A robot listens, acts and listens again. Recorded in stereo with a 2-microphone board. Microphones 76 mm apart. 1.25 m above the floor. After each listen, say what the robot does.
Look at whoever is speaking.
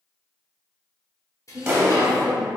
Turn 30° right.
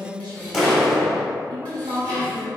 Turn 115° right.
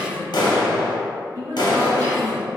Turn 45° right.
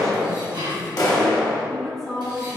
Facing the woman speaking.